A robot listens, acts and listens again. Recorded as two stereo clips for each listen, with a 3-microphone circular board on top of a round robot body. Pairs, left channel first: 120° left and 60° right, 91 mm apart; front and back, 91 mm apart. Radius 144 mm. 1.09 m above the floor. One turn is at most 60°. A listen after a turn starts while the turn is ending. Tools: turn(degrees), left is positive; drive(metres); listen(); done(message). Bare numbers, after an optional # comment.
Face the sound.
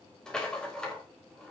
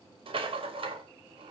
# The rattle: 155° right.
turn(-60)
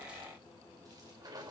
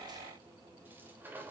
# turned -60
# The rattle is now 110° right.
turn(-60)
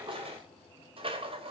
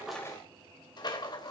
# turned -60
# The rattle is now 40° right.
turn(-40)
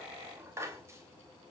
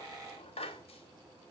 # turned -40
done("Found it: a rattle, straight ahead.")